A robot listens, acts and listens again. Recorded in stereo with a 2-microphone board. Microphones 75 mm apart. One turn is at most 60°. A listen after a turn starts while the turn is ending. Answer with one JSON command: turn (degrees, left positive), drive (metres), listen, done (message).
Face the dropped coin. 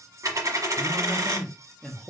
{"turn": -50}
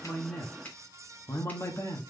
{"listen": true}
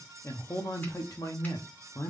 {"done": "I heard a dropped coin, but can't make it out now. It was about straight ahead or 80° right."}